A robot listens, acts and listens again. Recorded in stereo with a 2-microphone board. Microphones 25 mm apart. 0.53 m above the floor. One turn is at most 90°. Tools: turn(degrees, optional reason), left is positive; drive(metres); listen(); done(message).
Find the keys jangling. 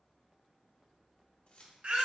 turn(degrees=55, reason="The keys jangling: about 55° left or 125° left.")
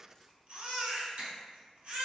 listen()
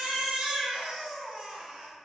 listen()
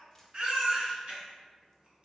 done("I heard keys jangling, but can't make it out now. It was about straight ahead or 70° left.")